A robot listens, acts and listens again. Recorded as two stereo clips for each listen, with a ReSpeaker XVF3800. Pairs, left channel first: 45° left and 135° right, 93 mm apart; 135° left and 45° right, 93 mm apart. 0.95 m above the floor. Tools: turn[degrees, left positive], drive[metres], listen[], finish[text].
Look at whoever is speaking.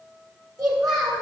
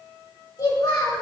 Thought: The child speaking: straight behind.
Action: turn[180]
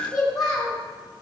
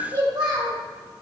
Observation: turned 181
Action: finish[Facing the child speaking, 1 to 2 m away.]